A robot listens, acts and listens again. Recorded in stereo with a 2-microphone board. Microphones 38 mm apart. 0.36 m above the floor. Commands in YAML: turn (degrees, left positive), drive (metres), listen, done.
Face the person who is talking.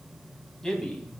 turn: 20
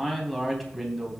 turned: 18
done: "Facing the man speaking, 2 to 4 m away."